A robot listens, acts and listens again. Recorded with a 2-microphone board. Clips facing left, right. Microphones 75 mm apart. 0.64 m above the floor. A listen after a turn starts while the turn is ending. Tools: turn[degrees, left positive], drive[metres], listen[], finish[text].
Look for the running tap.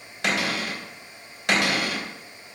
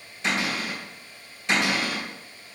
Action: listen[]
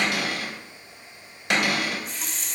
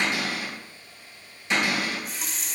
Action: turn[30]
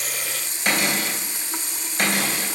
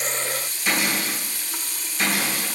Thought: So it is at 155° left.
Action: turn[155]
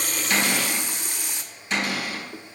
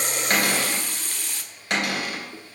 Thought: The running tap is now 25° left.
Action: turn[25]
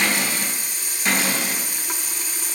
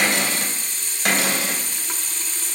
Thought: The running tap is now 15° left.
Action: turn[15]
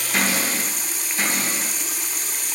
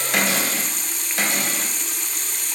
Action: finish[Found it: a running tap, straight ahead, under 1 m away.]